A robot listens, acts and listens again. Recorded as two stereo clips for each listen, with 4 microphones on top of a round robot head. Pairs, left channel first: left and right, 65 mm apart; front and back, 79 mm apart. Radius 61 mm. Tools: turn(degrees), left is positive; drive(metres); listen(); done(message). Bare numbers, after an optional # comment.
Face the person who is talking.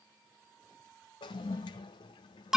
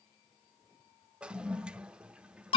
listen()
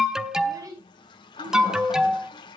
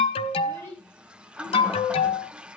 # The child speaking: 60° right.
turn(-60)
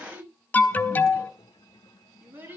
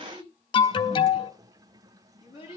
# The child speaking is now 30° right.
turn(-30)
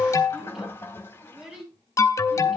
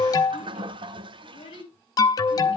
# The child speaking is now 10° right.
turn(-10)
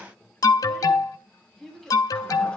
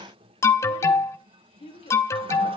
done("Found it: a child speaking, straight ahead, over 4 m away.")